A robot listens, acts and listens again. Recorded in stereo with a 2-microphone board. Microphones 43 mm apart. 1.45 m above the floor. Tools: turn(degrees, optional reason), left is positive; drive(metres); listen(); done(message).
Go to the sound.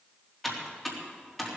turn(degrees=30)
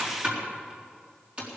turn(degrees=-30, reason="So it is at 30° right.")
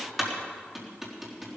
drive(metres=1.0)
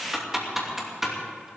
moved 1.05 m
drive(metres=1.0)
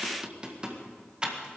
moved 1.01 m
turn(degrees=-20, reason="The typing on a keyboard is now 20° right.")
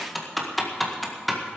drive(metres=1.0)
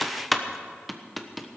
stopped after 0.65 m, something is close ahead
done("I am next to the typing on a keyboard.")